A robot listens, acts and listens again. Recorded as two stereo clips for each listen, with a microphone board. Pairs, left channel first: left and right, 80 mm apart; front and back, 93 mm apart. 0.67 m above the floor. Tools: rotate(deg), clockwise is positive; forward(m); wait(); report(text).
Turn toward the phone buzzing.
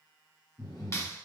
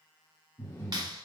wait()
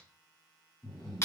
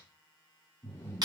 wait()
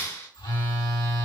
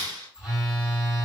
rotate(-95)
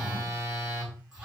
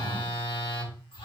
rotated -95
report("Facing the phone buzzing, 2 to 4 m away.")